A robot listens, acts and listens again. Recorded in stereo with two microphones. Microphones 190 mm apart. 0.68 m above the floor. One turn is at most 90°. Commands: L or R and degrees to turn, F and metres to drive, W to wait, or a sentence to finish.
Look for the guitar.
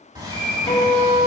L25
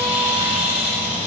W
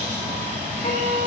L90
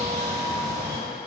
L40
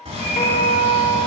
L35
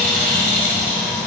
W
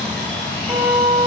R15
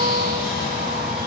W
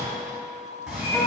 Facing the guitar.